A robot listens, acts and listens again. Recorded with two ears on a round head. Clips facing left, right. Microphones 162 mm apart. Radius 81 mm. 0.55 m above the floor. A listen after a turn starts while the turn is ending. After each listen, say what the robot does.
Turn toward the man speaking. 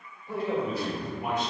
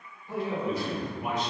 Turn 45° left.
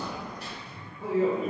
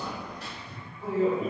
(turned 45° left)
Turn 120° left.
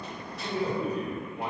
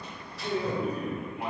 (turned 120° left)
Turn 30° left.
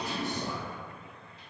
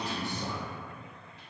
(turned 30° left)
Keep listening.
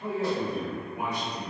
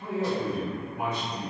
Turn 10° left.
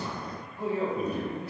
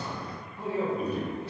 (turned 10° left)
Facing the man speaking.